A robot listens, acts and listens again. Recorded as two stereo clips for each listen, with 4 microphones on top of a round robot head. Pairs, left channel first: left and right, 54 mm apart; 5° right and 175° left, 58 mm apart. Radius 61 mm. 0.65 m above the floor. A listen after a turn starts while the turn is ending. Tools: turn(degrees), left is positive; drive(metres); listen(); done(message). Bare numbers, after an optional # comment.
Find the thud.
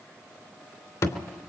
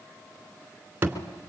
# The thud: 115° left.
turn(115)
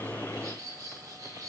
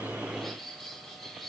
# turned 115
done("Facing where the thud came from. I can't hear it now.")